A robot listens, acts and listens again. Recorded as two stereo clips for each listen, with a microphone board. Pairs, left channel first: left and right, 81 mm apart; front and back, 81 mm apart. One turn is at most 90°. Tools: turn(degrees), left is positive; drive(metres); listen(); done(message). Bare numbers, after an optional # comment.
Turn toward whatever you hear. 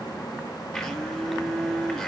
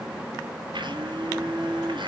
# The blender: 175° left.
turn(90)
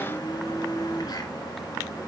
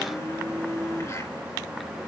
# The blender is now 55° left.
turn(55)
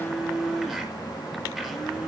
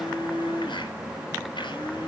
done("Facing the blender, over 4 m away.")